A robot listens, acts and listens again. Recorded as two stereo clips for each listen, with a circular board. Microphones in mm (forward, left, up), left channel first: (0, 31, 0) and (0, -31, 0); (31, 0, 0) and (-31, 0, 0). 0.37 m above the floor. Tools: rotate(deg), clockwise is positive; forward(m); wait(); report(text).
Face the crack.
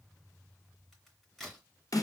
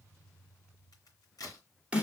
report("Found it: a crack, straight ahead, 2 to 4 m away.")